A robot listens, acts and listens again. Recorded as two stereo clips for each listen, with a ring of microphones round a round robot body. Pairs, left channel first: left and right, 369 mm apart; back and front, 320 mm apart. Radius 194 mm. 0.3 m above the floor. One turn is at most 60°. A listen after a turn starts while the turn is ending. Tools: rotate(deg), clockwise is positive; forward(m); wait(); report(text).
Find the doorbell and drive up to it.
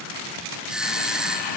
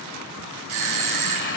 forward(1.0)
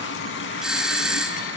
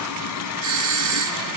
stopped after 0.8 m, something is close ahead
report("Something is in my way. I am facing the doorbell but have not reached it.")